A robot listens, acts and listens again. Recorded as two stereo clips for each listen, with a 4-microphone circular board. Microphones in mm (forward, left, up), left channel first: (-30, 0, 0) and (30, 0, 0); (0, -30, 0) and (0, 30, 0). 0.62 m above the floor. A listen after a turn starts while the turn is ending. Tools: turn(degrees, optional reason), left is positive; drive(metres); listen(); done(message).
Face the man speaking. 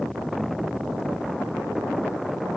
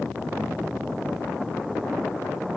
listen()
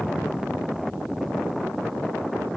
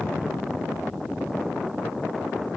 listen()
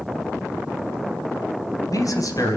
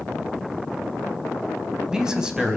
turn(degrees=165, reason="The man speaking: 165° left.")
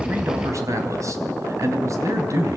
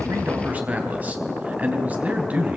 turn(degrees=30, reason="The man speaking is now 30° left.")
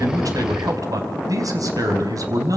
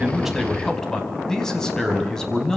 turn(degrees=-10, reason="The man speaking is now 10° right.")
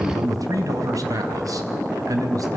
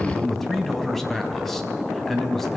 done("Found it: a man speaking, straight ahead.")